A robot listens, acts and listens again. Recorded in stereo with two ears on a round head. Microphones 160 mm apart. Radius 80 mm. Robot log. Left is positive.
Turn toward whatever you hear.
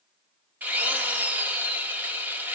cmd yaw -30
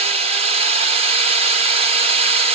note: So it is at 140° right.
cmd yaw -140
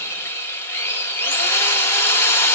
note: The drill is now 15° left.
cmd yaw +15
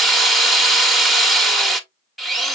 end: Found it: a drill, straight ahead.